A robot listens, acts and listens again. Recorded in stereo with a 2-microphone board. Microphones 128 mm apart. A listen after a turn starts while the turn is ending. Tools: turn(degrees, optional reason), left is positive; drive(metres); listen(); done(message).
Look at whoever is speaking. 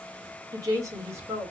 turn(degrees=-20, reason="The woman speaking: about 20° right or 160° right.")
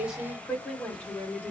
turn(degrees=15, reason="So it is at 15° left.")
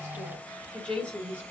turn(degrees=10, reason="The woman speaking is now 10° left.")
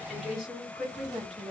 done("Facing the woman speaking, over 4 m away.")